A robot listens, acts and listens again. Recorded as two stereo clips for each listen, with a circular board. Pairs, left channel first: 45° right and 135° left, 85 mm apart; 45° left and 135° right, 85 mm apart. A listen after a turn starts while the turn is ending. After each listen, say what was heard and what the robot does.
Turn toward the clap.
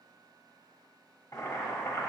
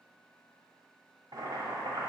Keep listening.
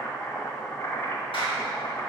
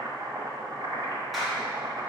The clap: 45° right. Turn 45° right.
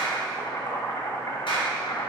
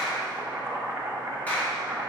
The clap is now 25° right. Turn 25° right.
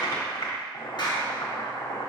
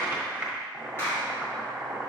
The clap is now 15° right. Turn 15° right.
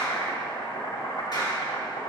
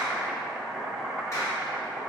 The clap is now 10° right. Turn 10° right.
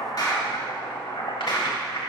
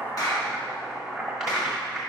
Found it: a clap, straight ahead.